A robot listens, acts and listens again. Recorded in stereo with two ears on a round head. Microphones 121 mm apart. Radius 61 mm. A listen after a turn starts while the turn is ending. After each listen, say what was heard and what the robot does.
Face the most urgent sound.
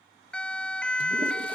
Turn 30° left.
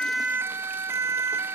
So it is at 20° right. Turn 20° right.
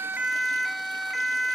Facing the siren.